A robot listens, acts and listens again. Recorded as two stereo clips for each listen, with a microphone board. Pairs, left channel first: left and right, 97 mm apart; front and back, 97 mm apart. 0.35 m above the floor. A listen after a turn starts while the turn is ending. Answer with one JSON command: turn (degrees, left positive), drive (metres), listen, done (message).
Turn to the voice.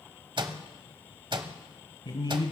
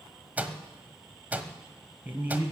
{"turn": 110}
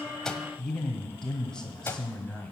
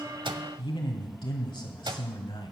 {"turn": 10}
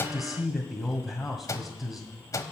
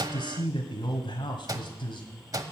{"done": "Found it: a man speaking, straight ahead, 2 to 4 m away."}